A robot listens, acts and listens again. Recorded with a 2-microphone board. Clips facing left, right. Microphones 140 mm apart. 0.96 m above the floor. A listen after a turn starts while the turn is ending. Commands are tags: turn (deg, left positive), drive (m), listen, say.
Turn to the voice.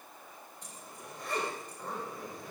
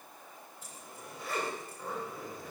<listen/>
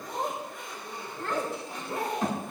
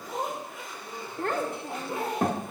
<turn deg="-55"/>
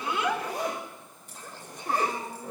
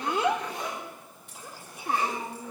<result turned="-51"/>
<turn deg="-10"/>
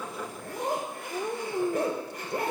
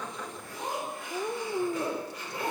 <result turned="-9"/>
<say>Facing the child speaking.</say>